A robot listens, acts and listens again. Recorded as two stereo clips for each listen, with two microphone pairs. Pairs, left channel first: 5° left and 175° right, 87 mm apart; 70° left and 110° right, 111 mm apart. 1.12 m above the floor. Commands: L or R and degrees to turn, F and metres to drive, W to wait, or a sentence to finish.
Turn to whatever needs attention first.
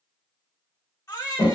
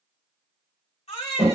L50
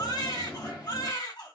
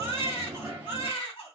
L25
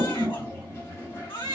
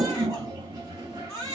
Facing the baby crying.